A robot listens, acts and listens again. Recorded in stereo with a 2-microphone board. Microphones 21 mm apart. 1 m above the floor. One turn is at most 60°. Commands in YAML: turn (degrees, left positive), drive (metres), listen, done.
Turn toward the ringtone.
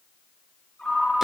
turn: 60
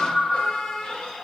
turn: 15
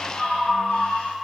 done: "Facing the ringtone."